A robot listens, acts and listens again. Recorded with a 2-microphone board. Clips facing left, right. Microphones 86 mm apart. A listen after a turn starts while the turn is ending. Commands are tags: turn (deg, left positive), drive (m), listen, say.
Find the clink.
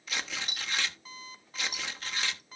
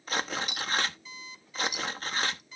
<turn deg="40"/>
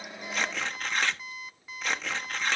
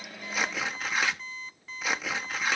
<listen/>
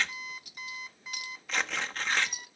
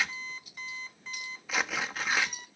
<turn deg="100"/>
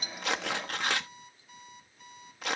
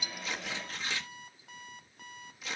<listen/>
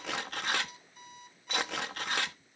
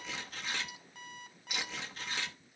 <listen/>
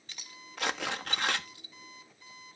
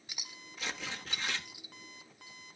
<turn deg="-10"/>
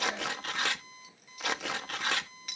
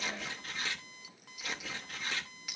<say>Facing the clink.</say>